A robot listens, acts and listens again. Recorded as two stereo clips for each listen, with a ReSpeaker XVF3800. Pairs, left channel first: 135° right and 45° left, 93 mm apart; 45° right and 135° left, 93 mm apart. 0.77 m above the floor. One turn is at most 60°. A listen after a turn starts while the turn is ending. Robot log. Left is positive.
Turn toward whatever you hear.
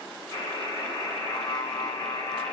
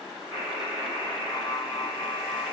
note: The buzzer: 95° right.
cmd yaw -60
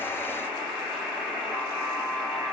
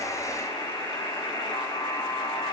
note: The buzzer is now 35° right.
cmd yaw -35
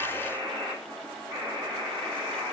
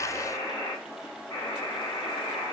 end: Found it: a buzzer, straight ahead.